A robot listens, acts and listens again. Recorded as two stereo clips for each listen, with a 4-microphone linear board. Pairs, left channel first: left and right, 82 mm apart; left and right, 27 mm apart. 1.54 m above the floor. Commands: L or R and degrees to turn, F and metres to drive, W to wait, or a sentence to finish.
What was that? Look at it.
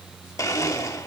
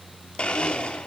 L40
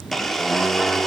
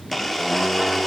Found it: a blender, straight ahead, 1 to 2 m away.